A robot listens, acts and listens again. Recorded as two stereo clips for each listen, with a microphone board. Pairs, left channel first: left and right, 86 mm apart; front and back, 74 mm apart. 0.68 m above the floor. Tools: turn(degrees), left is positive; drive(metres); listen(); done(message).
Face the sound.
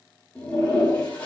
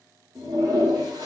turn(degrees=165)
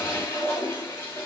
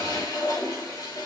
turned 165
turn(degrees=30)
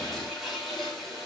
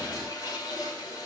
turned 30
done("Found it: a toilet flushing, straight ahead, 2 to 4 m away.")